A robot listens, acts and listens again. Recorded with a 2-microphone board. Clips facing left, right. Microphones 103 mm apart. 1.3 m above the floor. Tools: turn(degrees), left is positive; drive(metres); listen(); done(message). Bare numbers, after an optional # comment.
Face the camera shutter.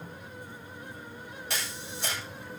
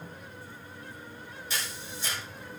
# The camera shutter: about 70° left or 110° left.
turn(70)
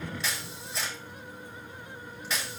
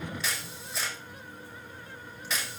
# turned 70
done("Facing the camera shutter, over 4 m away.")